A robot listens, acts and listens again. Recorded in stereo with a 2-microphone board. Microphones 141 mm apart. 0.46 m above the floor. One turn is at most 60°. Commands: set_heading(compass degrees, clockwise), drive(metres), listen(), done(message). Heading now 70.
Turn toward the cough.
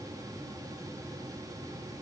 listen()
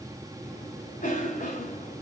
set_heading(10)
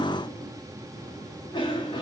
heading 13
set_heading(338)
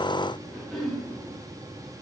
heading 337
done("Found it: a cough, straight ahead.")